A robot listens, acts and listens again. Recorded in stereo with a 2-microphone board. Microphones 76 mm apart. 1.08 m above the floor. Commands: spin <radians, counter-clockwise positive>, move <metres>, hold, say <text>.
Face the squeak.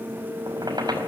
spin -1.13
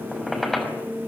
say Found it: a squeak, straight ahead.